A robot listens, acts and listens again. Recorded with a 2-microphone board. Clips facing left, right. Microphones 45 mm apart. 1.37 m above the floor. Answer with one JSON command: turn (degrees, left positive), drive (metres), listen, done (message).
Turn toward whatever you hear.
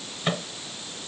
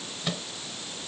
{"turn": 35}
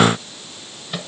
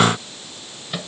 {"done": "Facing the microwave."}